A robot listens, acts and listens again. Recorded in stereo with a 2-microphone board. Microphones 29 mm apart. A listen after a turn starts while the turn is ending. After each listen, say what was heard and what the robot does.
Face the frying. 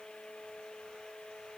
Keep listening.
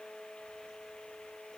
Keep listening.
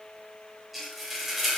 Turn 30° left.
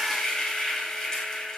So it is at 150° left. Turn 150° left.
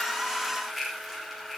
Found it: frying, straight ahead.